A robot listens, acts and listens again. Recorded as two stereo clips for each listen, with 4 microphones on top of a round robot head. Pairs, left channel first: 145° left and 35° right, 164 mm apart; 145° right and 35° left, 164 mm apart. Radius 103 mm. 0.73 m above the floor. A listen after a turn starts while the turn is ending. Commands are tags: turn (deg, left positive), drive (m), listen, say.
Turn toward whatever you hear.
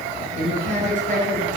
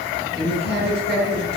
<turn deg="10"/>
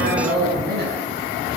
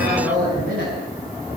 <say>Facing the woman speaking.</say>